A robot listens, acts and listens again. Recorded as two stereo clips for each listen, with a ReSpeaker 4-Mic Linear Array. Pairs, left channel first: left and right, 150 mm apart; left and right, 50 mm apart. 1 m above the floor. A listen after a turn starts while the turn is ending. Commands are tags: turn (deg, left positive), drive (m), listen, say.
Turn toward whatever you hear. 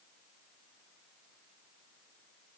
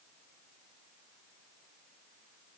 <listen/>
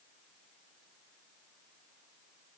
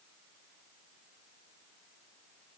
<listen/>
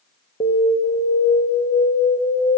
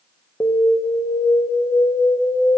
<turn deg="55"/>
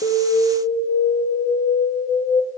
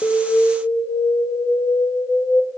<turn deg="65"/>
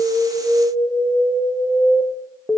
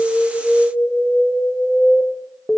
<say>Facing the alarm, 1 to 2 m away.</say>